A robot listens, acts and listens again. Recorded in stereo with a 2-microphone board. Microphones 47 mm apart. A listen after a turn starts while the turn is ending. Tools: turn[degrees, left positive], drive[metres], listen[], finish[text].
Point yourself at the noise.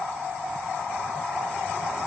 Action: listen[]
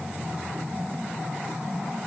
Action: listen[]
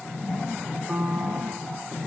Thought: The piano: about 30° right or 150° right.
Action: turn[-30]
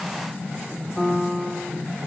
Action: finish[Found it: a piano, straight ahead, under 1 m away.]